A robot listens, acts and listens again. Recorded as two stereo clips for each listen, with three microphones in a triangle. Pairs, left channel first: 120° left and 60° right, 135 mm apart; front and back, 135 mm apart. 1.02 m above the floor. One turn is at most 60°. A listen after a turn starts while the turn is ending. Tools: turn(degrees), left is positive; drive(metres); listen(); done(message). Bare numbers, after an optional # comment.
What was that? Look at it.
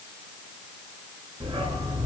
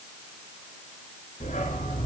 done("Facing the dog barking.")